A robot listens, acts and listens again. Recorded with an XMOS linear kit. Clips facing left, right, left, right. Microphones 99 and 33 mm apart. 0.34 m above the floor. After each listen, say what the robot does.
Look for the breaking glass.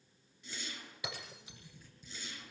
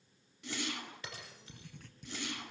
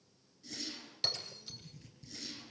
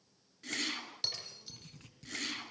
Turn 30° left.
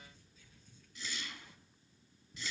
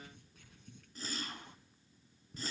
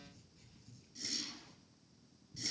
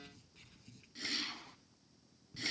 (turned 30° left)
Keep listening.
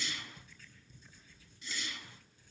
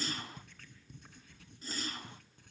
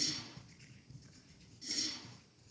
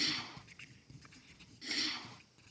I heard breaking glass, but can't make it out now. It was about 20° right or 140° left.